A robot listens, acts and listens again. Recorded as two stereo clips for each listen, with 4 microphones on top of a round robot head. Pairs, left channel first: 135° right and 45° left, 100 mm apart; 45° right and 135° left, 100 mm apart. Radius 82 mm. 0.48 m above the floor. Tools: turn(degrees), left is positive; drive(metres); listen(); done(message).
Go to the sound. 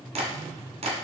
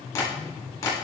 turn(degrees=20)
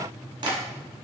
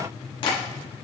drive(metres=1.0)
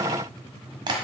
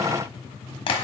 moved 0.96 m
drive(metres=1.0)
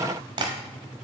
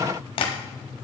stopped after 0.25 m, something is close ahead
done("I am next to the tapping.")